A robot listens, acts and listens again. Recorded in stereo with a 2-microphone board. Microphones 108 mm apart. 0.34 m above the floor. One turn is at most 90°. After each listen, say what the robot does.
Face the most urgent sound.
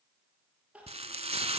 Turn 30° right.
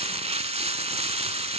Keep listening.
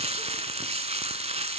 Keep listening.
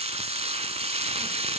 I heard crying, but can't make it out now. It was about 20° left or 140° right.